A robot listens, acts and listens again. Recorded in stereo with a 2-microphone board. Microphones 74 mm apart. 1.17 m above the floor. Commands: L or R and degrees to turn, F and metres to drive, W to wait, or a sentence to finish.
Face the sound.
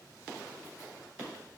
W
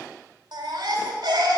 R90
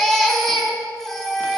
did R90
Facing the baby crying, 2 to 4 m away.